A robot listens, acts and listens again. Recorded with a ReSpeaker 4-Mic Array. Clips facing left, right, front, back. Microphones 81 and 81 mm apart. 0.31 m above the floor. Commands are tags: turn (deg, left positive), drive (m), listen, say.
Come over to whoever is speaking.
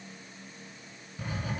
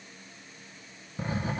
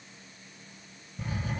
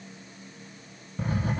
<listen/>
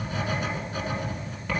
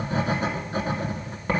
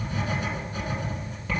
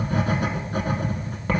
<listen/>
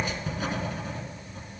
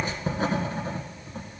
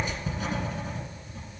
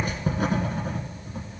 <say>I can't make out anyone speaking to turn to.</say>